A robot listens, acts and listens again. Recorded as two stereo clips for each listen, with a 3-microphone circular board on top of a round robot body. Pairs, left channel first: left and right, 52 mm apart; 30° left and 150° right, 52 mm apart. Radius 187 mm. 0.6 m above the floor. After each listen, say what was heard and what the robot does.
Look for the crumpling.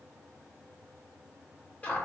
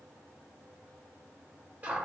Keep listening.
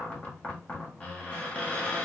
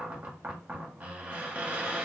Keep listening.
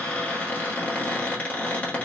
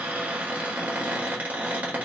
I can't make out crumpling to turn to.